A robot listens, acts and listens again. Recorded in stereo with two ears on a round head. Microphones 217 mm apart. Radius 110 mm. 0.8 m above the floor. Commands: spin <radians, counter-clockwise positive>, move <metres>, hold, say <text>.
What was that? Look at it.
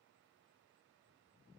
hold
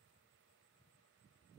hold
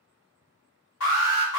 spin 1.22
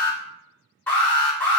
spin 0.17
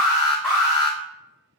say Facing the alarm.